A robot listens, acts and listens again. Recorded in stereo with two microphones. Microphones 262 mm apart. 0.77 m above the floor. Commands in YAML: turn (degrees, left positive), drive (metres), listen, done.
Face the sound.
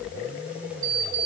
turn: 65
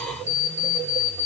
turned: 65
turn: 50
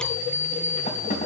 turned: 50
turn: 30
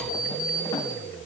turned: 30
turn: 15
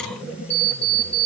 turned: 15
done: "Facing the alarm clock."